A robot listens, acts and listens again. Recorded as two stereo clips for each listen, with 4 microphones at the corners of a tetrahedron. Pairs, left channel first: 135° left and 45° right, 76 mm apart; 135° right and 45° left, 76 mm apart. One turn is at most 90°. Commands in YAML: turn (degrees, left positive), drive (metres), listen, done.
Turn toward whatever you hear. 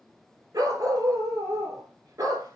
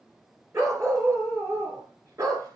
done: "Facing the dog barking."